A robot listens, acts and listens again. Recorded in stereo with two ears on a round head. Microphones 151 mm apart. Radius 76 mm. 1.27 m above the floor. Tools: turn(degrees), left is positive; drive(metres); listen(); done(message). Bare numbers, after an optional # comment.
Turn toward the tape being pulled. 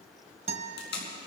# The tape being pulled: about 70° left or 110° left.
turn(70)
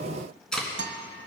done("Facing the tape being pulled, 2 to 4 m away.")